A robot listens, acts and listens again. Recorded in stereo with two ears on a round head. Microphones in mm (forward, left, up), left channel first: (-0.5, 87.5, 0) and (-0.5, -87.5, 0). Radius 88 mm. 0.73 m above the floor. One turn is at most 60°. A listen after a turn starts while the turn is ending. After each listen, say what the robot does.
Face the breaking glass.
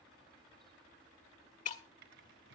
Turn 40° left.
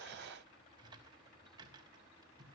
Keep listening.
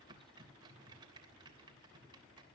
I heard breaking glass, but can't make it out now. It was about straight ahead or 100° left.